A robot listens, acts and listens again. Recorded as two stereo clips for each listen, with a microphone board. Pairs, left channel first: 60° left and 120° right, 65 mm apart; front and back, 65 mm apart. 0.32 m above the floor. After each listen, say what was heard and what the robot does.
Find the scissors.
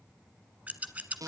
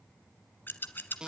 The scissors: 55° right. Turn 55° right.
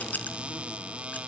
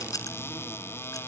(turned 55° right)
Keep listening.
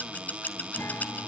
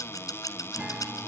Facing the scissors.